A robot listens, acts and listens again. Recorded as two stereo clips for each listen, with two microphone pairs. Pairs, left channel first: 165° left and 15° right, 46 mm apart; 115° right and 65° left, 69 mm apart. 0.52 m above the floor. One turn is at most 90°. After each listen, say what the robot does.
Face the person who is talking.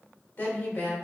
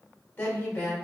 Turn 90° left.
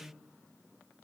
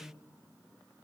Turn 90° left.
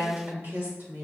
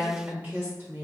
Facing the woman speaking, 1 to 2 m away.